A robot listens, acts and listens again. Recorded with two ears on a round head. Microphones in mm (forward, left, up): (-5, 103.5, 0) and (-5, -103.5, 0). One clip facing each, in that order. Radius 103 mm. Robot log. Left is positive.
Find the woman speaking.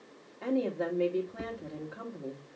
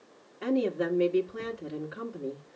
note: The woman speaking: about 15° right or 165° right.
cmd yaw -15
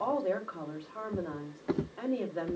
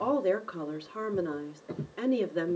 note: So it is at 150° right.
cmd yaw -150
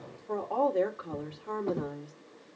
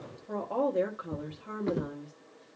note: The woman speaking is now 20° right.
cmd yaw -20
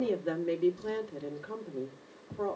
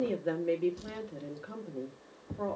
end: Facing the woman speaking, 1 to 2 m away.